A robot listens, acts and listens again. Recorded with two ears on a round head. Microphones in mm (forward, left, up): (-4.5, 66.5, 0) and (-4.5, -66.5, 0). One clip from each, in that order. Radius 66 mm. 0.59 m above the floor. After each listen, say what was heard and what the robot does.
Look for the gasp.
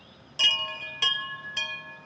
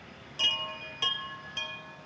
Keep listening.
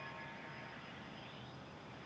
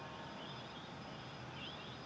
Keep listening.
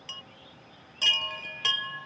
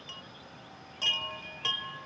I can't make out a gasp to turn to.